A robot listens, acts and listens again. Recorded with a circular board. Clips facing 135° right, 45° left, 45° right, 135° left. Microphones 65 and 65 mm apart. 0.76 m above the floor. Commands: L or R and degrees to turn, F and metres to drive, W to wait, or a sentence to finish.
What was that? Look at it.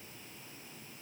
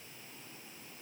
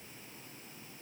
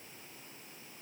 W
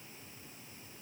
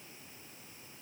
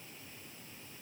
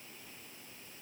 W
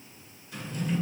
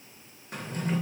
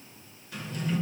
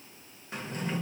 L80
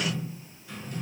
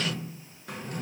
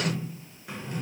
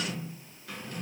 L20
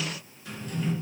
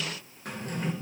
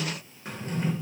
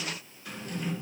L10
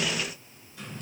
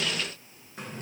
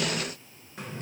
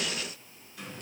Found it: a drawer, straight ahead.